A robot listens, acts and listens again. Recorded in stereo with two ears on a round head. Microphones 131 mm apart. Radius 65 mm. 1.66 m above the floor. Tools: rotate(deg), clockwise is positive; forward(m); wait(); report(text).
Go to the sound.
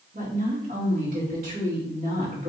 rotate(60)
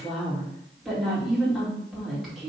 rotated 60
forward(1.0)
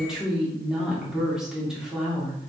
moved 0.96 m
forward(1.0)
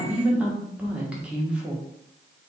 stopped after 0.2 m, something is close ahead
rotate(10)
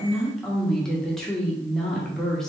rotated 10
report("Arrived at the woman speaking, straight ahead.")